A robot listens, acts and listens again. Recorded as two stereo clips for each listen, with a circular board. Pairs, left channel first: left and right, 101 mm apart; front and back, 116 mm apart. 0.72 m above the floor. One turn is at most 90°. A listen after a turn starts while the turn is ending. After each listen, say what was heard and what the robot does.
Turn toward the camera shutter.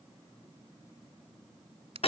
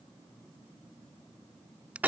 Keep listening.
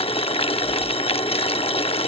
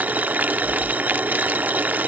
Keep listening.
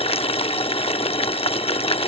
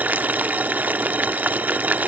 I can't make out a camera shutter, only boiling.